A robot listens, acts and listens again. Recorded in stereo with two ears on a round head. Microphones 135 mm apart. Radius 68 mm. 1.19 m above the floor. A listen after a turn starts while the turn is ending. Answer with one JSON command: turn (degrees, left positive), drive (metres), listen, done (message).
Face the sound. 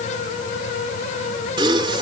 {"turn": -30}
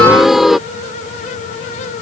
{"done": "Found it: a gasp, straight ahead."}